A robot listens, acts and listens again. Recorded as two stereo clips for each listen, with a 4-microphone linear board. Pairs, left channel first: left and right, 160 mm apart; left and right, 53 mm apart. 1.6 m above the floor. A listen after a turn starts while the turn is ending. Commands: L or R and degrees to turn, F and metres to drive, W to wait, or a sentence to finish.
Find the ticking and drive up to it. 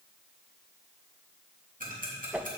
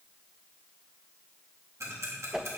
R65
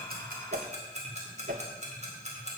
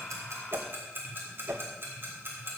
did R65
R50
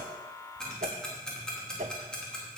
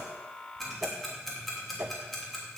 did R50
F1.0
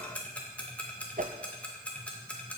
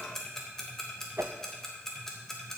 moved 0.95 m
L10
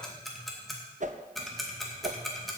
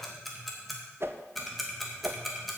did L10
F1.0
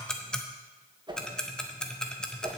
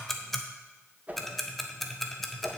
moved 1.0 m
F1.0
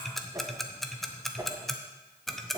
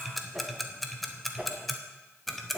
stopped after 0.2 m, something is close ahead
I am next to the ticking.